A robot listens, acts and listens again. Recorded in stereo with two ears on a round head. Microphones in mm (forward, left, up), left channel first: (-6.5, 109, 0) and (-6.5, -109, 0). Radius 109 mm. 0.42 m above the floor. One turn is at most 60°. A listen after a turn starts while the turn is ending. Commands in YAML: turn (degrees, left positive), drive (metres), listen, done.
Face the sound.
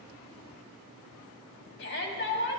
turn: 50
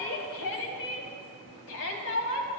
turn: 60
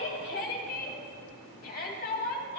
turn: 45
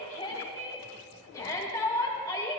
turn: 15
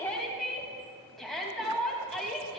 done: "Found it: a shout, straight ahead."